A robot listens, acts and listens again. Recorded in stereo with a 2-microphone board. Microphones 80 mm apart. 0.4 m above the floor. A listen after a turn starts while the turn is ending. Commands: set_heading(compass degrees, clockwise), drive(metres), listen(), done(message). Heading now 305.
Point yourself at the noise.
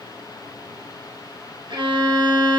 set_heading(35)
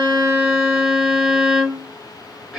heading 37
set_heading(47)
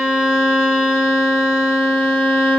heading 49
done("Facing the violin, 1 to 2 m away.")